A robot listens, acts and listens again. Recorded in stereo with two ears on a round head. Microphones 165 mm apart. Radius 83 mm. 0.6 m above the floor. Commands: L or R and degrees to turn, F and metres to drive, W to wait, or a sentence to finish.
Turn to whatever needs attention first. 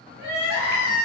R65
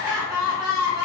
R15
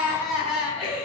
Facing the crying.